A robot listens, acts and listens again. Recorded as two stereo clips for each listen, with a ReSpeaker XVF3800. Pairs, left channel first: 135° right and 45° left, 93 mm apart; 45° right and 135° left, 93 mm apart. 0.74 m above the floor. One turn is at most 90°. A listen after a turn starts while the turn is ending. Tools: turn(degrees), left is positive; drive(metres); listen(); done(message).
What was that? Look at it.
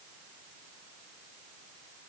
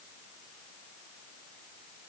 listen()
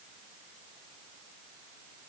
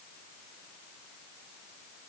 listen()
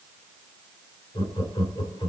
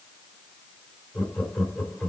turn(degrees=-90)
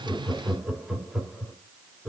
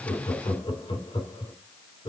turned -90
turn(degrees=-40)
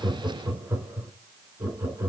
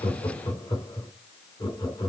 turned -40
turn(degrees=-15)
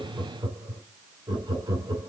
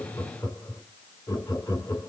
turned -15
done("Found it: laughter, straight ahead, 1 to 2 m away.")